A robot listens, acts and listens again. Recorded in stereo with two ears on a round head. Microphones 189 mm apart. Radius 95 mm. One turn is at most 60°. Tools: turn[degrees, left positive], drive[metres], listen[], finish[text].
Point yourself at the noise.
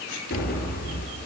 Thought: The explosion: about 55° left or 125° left.
Action: turn[55]
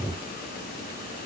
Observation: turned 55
Action: listen[]
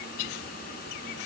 Action: finish[I heard an explosion, but can't make it out now. It was about straight ahead or 70° left.]